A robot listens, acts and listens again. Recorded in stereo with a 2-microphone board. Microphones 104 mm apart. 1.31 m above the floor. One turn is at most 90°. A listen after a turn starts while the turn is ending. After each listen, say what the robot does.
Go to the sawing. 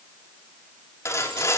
Turn 30° left.
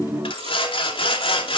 Turn 90° left.
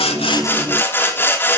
Turn 20° left.
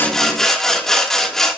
Drive 1.0 m forward.
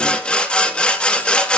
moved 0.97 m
Turn 10° left.
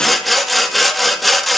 Drive 1.0 m forward.
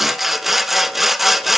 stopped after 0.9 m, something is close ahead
Arrived at the sawing, straight ahead.